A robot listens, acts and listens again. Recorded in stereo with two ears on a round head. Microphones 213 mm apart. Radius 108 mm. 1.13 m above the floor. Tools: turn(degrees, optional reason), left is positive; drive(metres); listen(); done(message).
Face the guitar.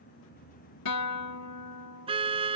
turn(degrees=90)
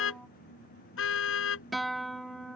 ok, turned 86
done("Facing the guitar.")